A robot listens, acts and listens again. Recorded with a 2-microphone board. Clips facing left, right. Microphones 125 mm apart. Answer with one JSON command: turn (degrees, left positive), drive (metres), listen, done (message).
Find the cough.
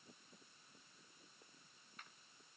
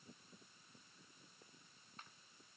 {"listen": true}
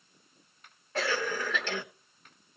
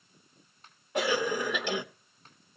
{"turn": -15}
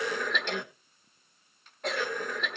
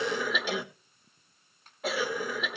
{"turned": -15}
{"done": "Facing the cough, 1 to 2 m away."}